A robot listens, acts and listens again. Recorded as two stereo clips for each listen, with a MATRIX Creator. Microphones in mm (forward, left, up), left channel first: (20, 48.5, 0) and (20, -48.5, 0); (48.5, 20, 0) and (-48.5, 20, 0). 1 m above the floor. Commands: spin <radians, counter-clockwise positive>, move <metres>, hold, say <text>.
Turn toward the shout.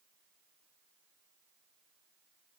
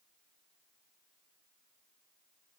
hold
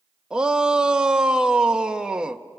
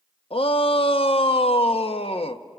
spin -0.17
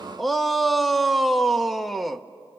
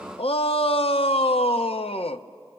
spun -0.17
say Found it: a shout, straight ahead, under 1 m away.